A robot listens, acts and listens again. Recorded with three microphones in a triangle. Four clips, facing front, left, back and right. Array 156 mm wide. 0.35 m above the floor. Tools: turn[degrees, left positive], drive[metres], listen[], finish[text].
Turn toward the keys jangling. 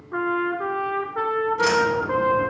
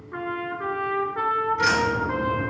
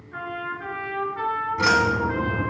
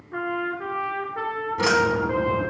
Thought: The keys jangling: 135° right.
Action: turn[-135]
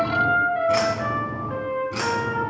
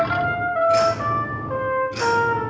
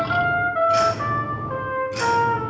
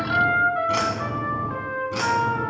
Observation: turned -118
Thought: The keys jangling is now 65° right.
Action: turn[-65]
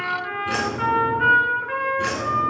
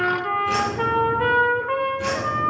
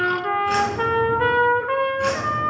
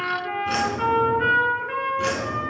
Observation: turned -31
Thought: The keys jangling is now 45° right.
Action: turn[-45]
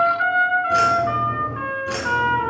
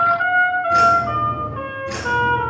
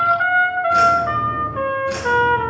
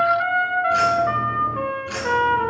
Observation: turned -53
Thought: The keys jangling is now 10° left.
Action: turn[10]
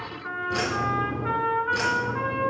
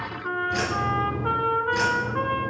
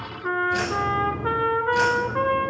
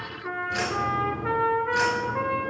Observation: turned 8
Action: finish[Facing the keys jangling.]